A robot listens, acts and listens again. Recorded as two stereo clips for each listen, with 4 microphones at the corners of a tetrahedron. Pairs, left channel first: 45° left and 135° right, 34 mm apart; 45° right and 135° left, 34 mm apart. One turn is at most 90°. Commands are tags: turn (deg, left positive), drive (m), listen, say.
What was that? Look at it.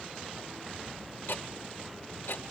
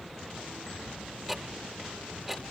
<turn deg="55"/>
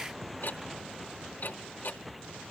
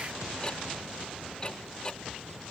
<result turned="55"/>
<turn deg="20"/>
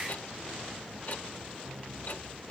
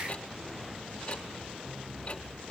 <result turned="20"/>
<turn deg="10"/>
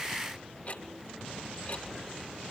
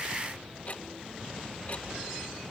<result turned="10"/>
<say>Found it: ticking, straight ahead.</say>